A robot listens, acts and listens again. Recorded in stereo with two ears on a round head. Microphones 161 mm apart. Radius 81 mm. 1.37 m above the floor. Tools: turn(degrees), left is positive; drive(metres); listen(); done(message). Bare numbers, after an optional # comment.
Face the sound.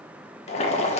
# The boiling: about 35° left or 145° left.
turn(35)
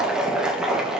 done("Facing the boiling, 1 to 2 m away.")